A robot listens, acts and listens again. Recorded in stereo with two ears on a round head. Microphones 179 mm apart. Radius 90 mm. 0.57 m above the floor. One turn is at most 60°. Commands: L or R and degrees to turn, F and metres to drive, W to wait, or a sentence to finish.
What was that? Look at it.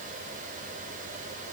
W
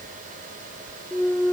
R30
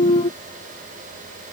L25
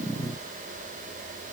I heard a clunk from this way, but can't make it out now.